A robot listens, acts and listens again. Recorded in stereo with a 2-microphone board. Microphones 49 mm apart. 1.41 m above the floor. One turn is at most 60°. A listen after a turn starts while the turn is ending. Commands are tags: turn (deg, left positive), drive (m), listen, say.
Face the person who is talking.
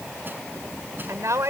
<turn deg="-60"/>
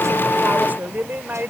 <turn deg="-40"/>
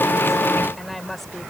<say>Facing the woman speaking.</say>